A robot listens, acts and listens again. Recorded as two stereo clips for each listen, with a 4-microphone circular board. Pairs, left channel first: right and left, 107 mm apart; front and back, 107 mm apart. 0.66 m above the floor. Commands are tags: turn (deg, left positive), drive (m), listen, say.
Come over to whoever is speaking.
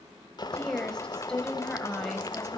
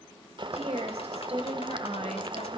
<turn deg="-170"/>
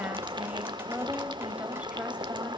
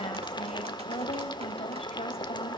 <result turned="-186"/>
<turn deg="15"/>
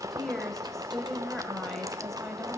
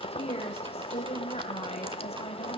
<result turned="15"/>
<drive m="1.0"/>
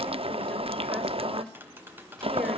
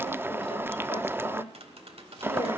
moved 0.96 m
<listen/>
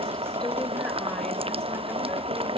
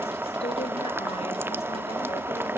<listen/>
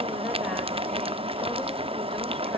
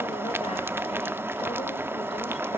<say>I heard a woman speaking from this way, but can't make it out now. I did not reach it.</say>